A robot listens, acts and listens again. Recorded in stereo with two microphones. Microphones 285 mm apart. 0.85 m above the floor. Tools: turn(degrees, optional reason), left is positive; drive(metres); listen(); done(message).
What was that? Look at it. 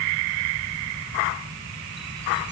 listen()
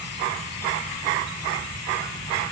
listen()
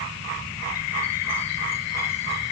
done("I can't make out anything to turn to.")